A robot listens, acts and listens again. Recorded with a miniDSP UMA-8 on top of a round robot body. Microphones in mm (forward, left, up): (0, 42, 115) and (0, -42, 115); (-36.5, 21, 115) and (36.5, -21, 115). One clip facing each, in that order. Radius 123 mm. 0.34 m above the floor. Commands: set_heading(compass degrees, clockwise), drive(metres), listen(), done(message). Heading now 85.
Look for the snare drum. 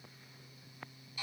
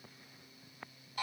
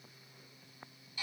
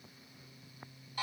listen()
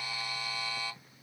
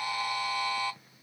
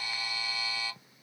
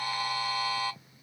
listen()
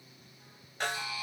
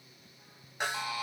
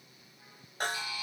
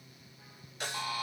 set_heading(255)
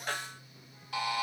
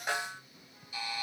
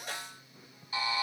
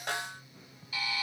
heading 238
set_heading(253)
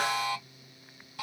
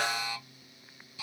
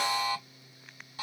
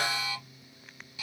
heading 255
listen()
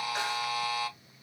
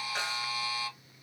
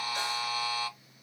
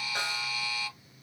listen()
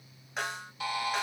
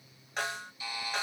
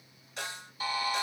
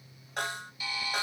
done("Found it: a snare drum, straight ahead.")